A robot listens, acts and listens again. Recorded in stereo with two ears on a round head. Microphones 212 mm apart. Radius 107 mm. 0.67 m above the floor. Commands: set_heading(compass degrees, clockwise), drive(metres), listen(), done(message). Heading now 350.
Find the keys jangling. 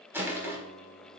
listen()
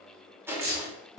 set_heading(30)
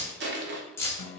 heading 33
set_heading(23)
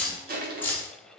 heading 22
set_heading(12)
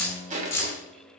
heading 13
set_heading(3)
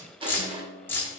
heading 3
set_heading(353)
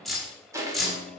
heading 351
done("Found it: keys jangling, straight ahead, 1 to 2 m away.")